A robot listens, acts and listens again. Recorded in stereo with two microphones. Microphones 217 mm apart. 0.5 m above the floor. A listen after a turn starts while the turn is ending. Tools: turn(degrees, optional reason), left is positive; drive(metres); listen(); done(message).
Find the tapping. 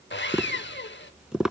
turn(degrees=-30)
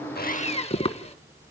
turn(degrees=25, reason="So it is at 25° left.")
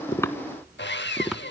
done("Facing the tapping, 1 to 2 m away.")